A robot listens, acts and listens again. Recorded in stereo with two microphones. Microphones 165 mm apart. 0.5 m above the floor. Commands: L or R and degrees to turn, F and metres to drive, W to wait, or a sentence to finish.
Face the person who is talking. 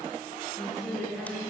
L30
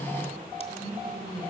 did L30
R35
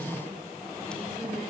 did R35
W
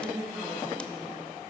R10
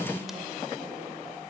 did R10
W
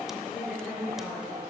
Facing the woman speaking.